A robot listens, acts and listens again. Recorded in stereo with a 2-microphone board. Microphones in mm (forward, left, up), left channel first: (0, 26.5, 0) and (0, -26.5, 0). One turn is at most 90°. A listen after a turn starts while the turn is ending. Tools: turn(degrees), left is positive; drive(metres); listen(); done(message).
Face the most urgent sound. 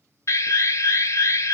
turn(degrees=70)
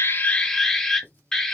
turn(degrees=10)
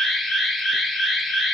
done("Found it: an alarm, straight ahead.")